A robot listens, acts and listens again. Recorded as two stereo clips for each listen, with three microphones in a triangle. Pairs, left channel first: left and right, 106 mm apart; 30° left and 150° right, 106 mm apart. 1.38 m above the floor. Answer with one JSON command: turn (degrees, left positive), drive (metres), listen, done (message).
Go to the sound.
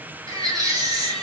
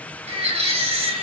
{"turn": -140}
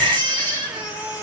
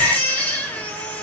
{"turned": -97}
{"turn": -45}
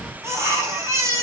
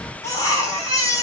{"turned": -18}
{"turn": -25}
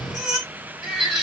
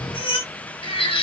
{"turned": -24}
{"drive": 1.0}
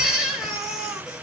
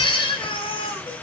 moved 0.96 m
{"drive": 1.0}
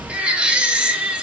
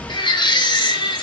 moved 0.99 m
{"turn": -10}
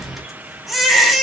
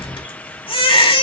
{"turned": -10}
{"drive": 1.0}
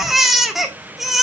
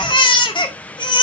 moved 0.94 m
{"drive": 1.0}
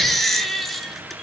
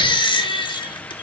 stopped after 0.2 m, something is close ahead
{"done": "I am next to the baby crying."}